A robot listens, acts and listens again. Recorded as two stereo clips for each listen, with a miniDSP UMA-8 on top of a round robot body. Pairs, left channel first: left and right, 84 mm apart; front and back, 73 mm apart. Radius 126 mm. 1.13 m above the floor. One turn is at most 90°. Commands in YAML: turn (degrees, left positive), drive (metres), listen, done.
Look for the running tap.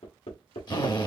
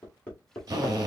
listen: true
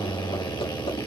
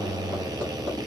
listen: true
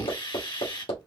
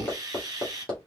done: "I can't make out a running tap to turn to."